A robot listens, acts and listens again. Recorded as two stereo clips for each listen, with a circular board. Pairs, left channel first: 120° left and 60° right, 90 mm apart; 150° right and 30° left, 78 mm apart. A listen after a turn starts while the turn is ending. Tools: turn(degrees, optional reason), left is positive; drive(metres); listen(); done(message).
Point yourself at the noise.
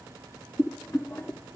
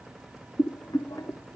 turn(degrees=-175, reason="The boiling: 175° right.")
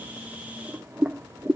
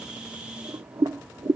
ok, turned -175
turn(degrees=10, reason="The boiling is now 10° left.")
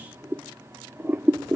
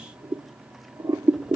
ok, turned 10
done("Facing the boiling, 1 to 2 m away.")